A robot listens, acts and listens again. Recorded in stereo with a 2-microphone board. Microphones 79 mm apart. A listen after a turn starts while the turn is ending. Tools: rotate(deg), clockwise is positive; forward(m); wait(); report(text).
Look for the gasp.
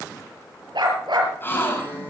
rotate(-25)
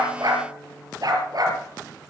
wait()
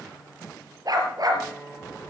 report("I heard a gasp, but can't make it out now. It was about straight ahead or 130° left.")